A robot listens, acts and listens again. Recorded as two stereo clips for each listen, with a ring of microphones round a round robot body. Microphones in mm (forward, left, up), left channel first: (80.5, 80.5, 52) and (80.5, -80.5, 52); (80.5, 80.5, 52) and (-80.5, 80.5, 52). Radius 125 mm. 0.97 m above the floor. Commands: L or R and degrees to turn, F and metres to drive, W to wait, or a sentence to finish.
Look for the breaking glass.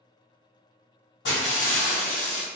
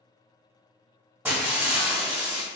L100
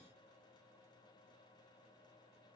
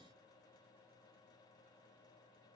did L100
I heard breaking glass from this way, but can't make it out now.